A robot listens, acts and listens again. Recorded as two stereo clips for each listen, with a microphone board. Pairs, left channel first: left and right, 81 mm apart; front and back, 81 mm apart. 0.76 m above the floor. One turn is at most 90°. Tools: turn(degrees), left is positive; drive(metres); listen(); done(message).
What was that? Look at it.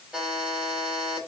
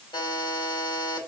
turn(degrees=-15)
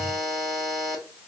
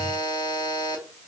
done("Facing the buzzer, 2 to 4 m away.")